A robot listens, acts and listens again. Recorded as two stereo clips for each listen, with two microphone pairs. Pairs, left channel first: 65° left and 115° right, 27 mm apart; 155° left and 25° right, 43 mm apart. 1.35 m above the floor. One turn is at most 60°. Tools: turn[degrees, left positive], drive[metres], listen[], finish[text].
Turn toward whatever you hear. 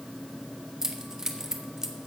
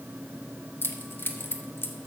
Thought: The keys jangling: straight behind.
Action: turn[60]
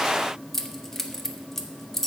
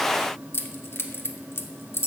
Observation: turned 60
Thought: The keys jangling is now 145° left.
Action: turn[60]
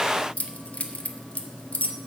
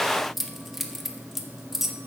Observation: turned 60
Thought: The keys jangling is now 60° left.
Action: turn[60]
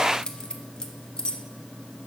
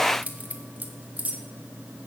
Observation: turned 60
Thought: The keys jangling is now 20° left.
Action: turn[20]
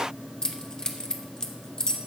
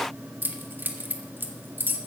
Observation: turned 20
Thought: The keys jangling is now 10° left.
Action: turn[10]
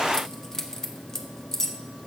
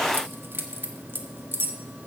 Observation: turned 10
Action: finish[Found it: keys jangling, straight ahead, 1 to 2 m away.]